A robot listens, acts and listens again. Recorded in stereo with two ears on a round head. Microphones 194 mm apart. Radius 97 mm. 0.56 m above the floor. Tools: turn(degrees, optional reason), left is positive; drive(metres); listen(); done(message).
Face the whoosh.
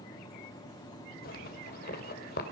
listen()
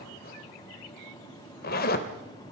listen()
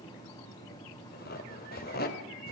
done("I can't make out a whoosh to turn to.")